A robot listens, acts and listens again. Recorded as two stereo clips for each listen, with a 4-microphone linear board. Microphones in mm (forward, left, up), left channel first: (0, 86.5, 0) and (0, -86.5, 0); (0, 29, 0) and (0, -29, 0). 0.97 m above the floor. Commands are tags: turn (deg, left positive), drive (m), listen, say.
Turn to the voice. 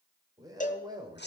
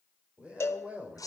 <turn deg="-25"/>
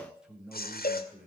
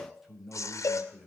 <turn deg="-10"/>
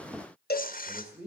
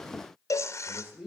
<turn deg="-10"/>
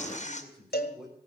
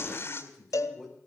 <say>Facing the man speaking.</say>